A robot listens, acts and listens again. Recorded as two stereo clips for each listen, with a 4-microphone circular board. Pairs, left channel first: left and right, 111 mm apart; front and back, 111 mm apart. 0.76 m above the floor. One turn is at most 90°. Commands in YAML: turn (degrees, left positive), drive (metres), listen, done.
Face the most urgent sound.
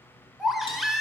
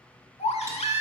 done: "Found it: a baby crying, straight ahead."